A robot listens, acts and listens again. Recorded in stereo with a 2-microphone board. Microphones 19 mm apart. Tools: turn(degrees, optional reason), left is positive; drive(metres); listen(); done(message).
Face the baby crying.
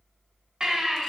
turn(degrees=-50, reason="The baby crying: about 50° right or 130° right.")
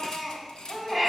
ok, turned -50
done("Facing the baby crying, 2 to 4 m away.")